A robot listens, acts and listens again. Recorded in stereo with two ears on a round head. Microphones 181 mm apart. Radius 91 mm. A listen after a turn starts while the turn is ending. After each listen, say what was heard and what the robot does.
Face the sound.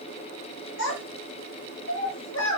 The child speaking: about 65° left or 115° left. Turn 65° left.
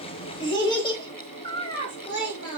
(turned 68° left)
So it is at 25° left. Turn 25° left.
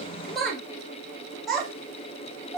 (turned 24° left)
Found it: a child speaking, straight ahead, 1 to 2 m away.